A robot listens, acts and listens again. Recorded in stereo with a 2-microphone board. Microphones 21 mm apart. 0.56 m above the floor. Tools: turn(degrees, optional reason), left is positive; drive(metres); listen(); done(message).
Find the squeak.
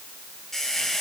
turn(degrees=20, reason="The squeak: about 20° left or 160° left.")
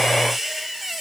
done("Facing the squeak, 2 to 4 m away.")